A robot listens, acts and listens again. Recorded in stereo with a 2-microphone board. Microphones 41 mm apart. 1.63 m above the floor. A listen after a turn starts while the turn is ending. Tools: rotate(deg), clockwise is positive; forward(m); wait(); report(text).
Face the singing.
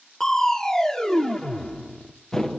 wait()
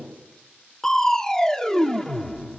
wait()
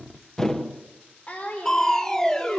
rotate(-35)
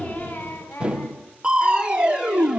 rotate(-110)
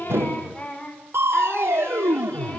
rotate(-30)
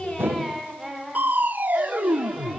report("Found it: singing, straight ahead.")